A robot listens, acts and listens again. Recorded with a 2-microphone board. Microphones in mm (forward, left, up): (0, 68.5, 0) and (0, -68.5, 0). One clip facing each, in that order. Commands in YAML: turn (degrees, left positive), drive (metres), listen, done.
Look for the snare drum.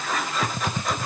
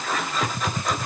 listen: true
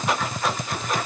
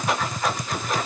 listen: true
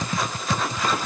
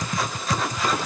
done: "I can't make out a snare drum, only typing on a keyboard."